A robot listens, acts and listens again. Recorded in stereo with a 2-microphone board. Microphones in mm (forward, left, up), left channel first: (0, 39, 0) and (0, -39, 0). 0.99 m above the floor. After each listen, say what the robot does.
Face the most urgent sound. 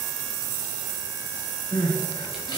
Turn 75° left.
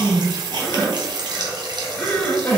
Turn 15° left.
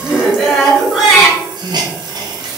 Found it: crying, straight ahead, 1 to 2 m away.